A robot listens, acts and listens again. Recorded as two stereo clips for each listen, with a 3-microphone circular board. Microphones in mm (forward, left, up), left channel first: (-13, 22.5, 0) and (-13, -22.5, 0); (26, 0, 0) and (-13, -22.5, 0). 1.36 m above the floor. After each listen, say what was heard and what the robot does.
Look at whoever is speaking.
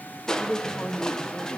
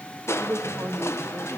The man speaking: 155° left. Turn 155° left.
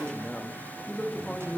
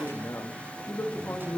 The man speaking is now 10° left. Turn 10° left.
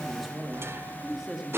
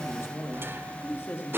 The man speaking is now 10° right. Turn 10° right.
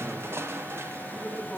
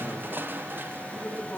The man speaking is now 10° right. Turn 10° right.
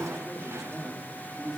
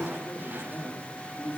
Found it: a man speaking, straight ahead, 2 to 4 m away.